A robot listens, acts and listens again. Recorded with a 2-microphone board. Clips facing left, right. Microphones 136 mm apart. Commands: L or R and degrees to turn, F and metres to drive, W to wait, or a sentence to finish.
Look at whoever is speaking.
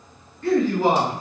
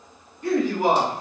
R15
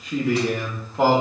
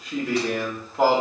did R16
Found it: a man speaking, straight ahead.